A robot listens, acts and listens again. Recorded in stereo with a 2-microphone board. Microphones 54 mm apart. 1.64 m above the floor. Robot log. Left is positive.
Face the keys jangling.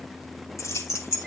note: The keys jangling: about 75° left or 105° left.
cmd yaw +75
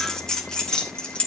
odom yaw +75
note: So it is at 20° left.
cmd yaw +20
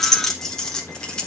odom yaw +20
note: The keys jangling is now 20° left.
cmd yaw +20
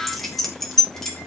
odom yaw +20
note: The keys jangling is now 10° left.
cmd yaw +10
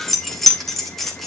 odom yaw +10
end: Found it: keys jangling, straight ahead, 2 to 4 m away.